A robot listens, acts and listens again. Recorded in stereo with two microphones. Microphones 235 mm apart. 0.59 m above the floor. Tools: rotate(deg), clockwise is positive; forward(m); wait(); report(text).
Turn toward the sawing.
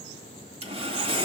rotate(25)
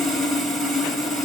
report("Found it: sawing, straight ahead.")